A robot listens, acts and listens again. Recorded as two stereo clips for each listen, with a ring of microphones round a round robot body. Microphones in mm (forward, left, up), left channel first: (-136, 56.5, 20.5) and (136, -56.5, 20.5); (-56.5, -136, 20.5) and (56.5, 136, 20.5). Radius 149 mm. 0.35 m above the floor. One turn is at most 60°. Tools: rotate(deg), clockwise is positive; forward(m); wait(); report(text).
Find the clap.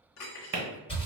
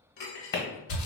rotate(60)
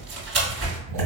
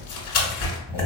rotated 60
rotate(15)
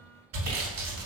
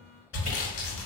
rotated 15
wait()
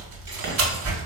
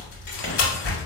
wait()
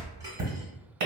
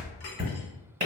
report("Found it: a clap, straight ahead.")